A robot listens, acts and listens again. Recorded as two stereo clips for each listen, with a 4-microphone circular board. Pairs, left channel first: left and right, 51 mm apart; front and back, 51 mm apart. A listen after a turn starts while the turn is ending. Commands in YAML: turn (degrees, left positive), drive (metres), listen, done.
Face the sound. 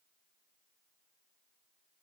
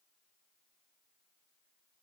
listen: true
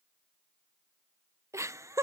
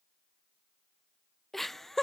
turn: -80
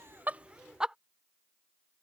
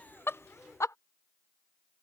turn: -15
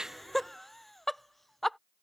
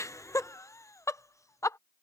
done: "Facing the laughter."